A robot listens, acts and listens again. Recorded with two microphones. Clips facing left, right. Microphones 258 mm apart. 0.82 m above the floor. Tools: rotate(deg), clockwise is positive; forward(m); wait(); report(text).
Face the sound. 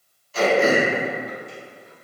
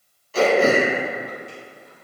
rotate(70)
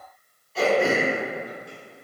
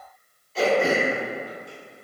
report("Found it: throat clearing, straight ahead.")